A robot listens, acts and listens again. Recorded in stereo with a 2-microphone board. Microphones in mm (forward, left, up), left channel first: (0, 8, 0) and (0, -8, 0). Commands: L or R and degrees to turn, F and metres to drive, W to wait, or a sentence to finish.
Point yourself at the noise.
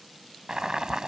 R55
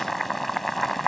Facing the boiling.